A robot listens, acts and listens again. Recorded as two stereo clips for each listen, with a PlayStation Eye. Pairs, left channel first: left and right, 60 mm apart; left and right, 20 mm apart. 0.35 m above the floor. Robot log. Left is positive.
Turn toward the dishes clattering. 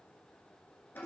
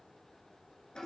cmd idle
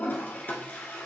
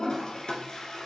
cmd idle
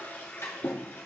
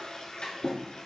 note: The dishes clattering: about 55° left or 125° left.
cmd yaw +55
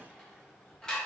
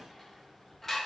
note: So it is at 15° left.
cmd yaw +15
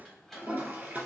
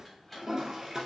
end: Facing the dishes clattering, 1 to 2 m away.